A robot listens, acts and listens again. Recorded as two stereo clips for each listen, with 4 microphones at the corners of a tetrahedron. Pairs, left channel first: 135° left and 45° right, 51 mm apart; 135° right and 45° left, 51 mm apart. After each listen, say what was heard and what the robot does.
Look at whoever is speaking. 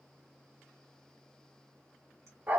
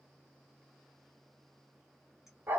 Keep listening.
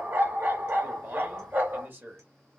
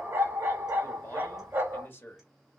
The man speaking: 95° right. Turn 95° right.
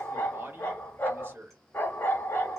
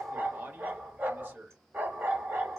Facing the man speaking, 1 to 2 m away.